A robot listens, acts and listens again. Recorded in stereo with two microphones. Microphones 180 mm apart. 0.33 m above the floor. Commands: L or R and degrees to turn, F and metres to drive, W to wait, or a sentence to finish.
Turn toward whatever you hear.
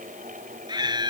R25
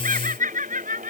R130
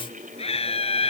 L35
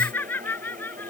L10
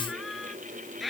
Found it: laughter, straight ahead.